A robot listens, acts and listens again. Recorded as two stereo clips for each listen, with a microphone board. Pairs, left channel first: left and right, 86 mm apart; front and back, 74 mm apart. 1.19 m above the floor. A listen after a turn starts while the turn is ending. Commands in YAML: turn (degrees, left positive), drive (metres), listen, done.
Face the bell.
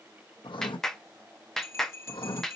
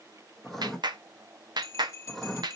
turn: 40
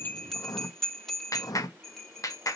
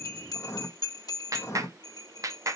done: "Found it: a bell, straight ahead, 1 to 2 m away."